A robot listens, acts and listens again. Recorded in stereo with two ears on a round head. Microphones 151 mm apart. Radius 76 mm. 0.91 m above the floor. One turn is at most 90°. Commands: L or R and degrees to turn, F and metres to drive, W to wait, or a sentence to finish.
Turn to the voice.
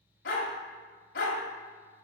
W
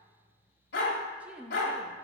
R30
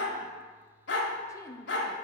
L20
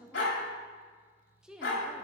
Found it: a woman speaking, straight ahead.